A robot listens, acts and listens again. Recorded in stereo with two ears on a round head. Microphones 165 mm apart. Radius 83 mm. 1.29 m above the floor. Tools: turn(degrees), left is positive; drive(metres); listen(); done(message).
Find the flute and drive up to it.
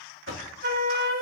turn(degrees=-55)
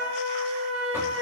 turn(degrees=-65)
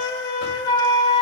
turn(degrees=20)
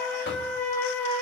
turn(degrees=10)
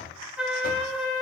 drive(metres=1.0)
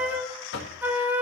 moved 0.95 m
turn(degrees=-10)
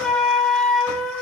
drive(metres=1.0)
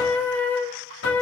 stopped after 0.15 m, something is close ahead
turn(degrees=10)
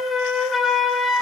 done("Arrived at the flute, straight ahead.")